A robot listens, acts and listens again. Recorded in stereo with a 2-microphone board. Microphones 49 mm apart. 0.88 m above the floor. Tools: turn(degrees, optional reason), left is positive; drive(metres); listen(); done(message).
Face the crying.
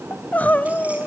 turn(degrees=35, reason="The crying: about 35° left or 145° left.")
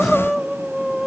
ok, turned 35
done("Facing the crying.")